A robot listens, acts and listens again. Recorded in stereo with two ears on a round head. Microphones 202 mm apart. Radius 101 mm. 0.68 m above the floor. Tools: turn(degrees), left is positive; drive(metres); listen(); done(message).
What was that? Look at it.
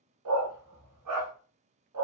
turn(degrees=-90)
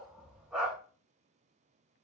done("Facing the dog barking.")